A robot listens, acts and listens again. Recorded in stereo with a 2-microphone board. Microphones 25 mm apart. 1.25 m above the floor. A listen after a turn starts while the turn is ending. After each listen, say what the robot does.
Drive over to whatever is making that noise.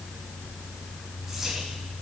Turn 30° right.
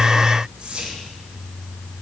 Turn 140° right.
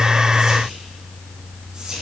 Turn 35° right.
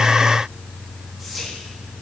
Drive 1.0 m forward.
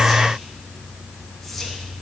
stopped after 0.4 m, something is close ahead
Keep listening.
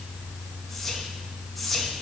Something is in my way. I am facing the whispering but have not reached it.